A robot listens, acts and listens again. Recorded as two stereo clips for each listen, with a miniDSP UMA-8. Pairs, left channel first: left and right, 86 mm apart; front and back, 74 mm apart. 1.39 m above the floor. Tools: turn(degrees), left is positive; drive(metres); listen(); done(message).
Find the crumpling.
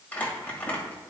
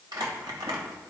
turn(degrees=160)
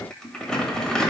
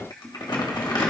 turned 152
turn(degrees=10)
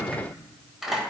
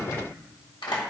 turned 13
done("Found it: crumpling, straight ahead, 1 to 2 m away.")